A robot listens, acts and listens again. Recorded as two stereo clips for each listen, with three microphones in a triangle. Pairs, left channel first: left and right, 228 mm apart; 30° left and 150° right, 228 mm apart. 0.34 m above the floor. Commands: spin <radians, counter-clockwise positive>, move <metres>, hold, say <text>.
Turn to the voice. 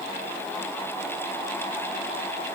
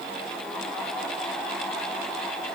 hold
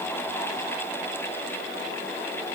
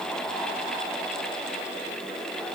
hold
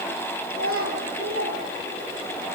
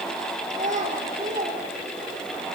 spin -1.66
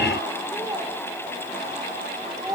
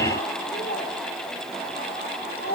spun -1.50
spin -0.26
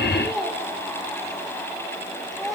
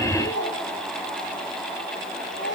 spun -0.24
say Facing the child speaking, over 4 m away.